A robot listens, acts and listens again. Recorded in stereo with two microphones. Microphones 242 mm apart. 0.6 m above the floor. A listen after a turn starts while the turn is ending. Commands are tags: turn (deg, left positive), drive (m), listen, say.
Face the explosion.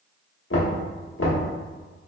<listen/>
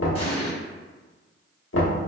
<turn deg="20"/>
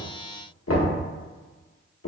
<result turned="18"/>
<listen/>
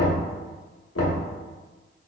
<say>I heard an explosion, but can't make it out now. It was about 5° left or 140° left.</say>